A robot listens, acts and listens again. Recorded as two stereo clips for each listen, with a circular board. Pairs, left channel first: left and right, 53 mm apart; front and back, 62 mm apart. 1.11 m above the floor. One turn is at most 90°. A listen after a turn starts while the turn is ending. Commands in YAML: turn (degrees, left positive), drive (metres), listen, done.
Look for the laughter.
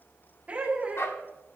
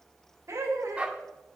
turn: -90
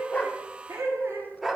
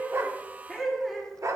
turn: -90
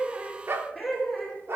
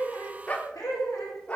done: "Found it: laughter, straight ahead, 2 to 4 m away."